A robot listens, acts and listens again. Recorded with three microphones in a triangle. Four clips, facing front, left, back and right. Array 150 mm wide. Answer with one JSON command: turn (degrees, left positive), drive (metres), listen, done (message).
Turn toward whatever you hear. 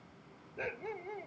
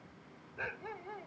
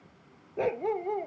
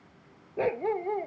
{"turn": -130}
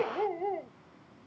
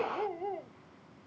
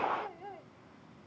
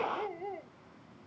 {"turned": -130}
{"done": "Found it: a dog barking, straight ahead."}